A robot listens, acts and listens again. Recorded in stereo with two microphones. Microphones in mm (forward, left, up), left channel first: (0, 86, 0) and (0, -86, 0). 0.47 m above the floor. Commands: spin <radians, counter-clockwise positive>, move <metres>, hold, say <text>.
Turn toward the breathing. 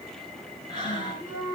spin 0.44
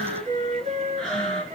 say Facing the breathing, 2 to 4 m away.